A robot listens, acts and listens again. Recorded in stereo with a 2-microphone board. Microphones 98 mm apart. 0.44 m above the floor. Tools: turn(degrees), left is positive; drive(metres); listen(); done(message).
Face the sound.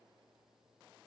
listen()
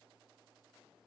listen()
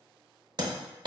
turn(degrees=-50)
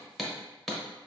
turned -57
done("Facing the hammering.")